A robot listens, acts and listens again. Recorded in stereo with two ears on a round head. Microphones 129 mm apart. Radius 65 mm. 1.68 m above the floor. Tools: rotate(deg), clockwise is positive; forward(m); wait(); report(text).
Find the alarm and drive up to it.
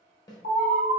rotate(-65)
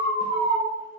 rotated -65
rotate(-35)
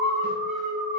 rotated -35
forward(1.0)
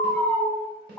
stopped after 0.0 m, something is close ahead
rotate(-10)
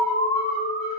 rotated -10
report("Something is in my way. I am facing the alarm but have not reached it.")